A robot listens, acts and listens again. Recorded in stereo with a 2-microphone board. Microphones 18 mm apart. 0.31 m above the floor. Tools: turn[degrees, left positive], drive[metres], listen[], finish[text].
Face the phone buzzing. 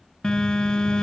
Thought: The phone buzzing: about 45° left or 135° left.
Action: turn[45]
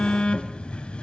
Thought: So it is at 90° left.
Action: turn[90]
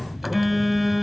Action: finish[Facing the phone buzzing, 1 to 2 m away.]